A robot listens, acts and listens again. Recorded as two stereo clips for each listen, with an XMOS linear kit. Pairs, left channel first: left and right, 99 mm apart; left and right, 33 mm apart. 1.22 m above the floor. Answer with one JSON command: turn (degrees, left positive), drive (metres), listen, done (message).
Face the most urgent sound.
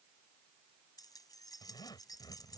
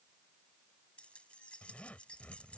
{"listen": true}
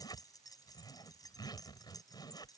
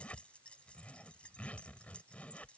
{"listen": true}
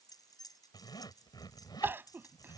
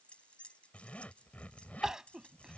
{"turn": -20}
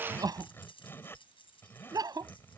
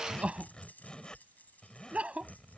{"turn": -135}
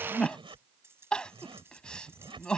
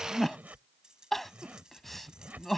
{"turn": 10}
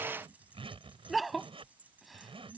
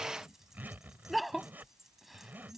{"done": "Facing the crying."}